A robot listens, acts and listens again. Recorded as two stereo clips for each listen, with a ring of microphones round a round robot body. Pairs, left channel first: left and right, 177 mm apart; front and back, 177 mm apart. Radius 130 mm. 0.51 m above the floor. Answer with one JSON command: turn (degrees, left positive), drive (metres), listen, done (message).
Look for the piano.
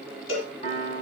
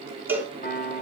{"turn": 40}
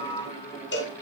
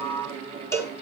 {"listen": true}
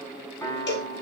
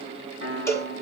{"turn": 15}
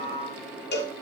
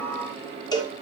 {"listen": true}
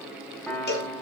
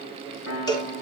{"done": "Found it: a piano, straight ahead, over 4 m away."}